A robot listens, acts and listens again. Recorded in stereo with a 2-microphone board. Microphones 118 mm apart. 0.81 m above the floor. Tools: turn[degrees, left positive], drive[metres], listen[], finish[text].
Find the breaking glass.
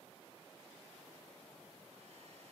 Action: listen[]
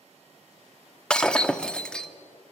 Action: turn[30]
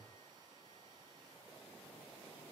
Action: listen[]
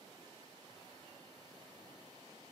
Action: finish[I heard breaking glass, but can't make it out now. It was about 20° right or 140° left.]